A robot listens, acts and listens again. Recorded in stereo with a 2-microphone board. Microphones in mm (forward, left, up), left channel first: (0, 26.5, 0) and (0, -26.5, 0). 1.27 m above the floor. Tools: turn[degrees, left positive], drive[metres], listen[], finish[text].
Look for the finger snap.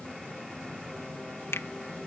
Thought: The finger snap: about 55° left or 125° left.
Action: turn[55]
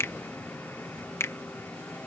Thought: So it is at 65° left.
Action: turn[65]
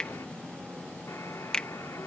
Thought: The finger snap is now 15° left.
Action: turn[15]
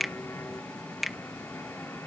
Action: finish[Found it: a finger snap, straight ahead.]